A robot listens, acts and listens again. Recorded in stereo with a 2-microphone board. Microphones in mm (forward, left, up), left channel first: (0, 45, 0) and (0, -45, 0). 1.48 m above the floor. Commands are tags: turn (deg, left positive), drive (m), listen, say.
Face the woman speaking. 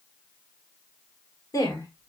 <turn deg="45"/>
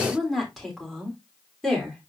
<say>Found it: a woman speaking, straight ahead, over 4 m away.</say>